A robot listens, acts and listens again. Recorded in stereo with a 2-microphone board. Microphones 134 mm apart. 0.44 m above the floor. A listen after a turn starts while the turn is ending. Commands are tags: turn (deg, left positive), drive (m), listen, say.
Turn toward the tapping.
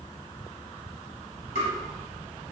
<turn deg="65"/>
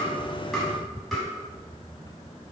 <say>Facing the tapping.</say>